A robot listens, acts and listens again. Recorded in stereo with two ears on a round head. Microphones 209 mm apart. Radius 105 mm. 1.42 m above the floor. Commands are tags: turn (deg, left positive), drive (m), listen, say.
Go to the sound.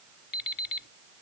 <turn deg="40"/>
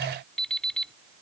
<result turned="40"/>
<drive m="1.0"/>
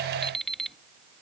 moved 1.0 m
<drive m="1.0"/>
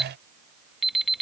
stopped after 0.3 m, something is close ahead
<say>I am next to the alarm clock.</say>